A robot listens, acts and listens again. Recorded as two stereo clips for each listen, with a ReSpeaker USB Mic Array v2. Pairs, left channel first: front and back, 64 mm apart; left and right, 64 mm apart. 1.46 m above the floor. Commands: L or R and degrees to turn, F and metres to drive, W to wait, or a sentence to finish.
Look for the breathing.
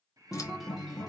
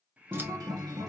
R155
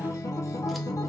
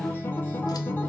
W
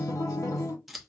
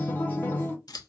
W
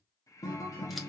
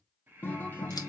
R30
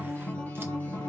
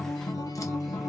W
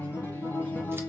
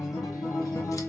W
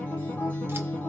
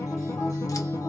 I heard breathing from this way, but can't make it out now.